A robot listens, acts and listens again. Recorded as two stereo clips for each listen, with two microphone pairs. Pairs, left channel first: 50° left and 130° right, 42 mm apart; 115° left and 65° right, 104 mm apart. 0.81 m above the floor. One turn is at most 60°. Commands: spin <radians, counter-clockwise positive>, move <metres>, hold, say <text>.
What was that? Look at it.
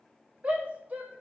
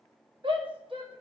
spin -1.05
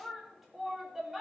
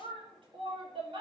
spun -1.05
spin -0.70
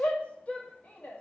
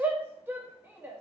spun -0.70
say Found it: a shout, straight ahead.